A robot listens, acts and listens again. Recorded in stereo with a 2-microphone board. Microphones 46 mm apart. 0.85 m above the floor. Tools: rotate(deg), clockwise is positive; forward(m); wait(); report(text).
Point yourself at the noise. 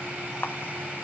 rotate(-60)
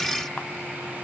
wait()
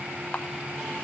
rotate(-35)
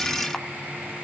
wait()
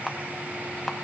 report("Found it: a camera shutter, straight ahead.")